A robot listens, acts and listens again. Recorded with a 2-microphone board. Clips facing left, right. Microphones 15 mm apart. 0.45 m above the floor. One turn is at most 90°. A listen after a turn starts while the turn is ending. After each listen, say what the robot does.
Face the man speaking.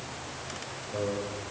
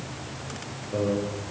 Turn 25° right.
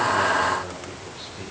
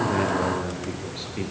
Turn 90° right.
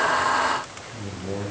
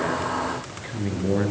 Turn 40° right.
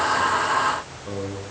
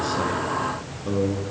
Found it: a man speaking, straight ahead, over 4 m away.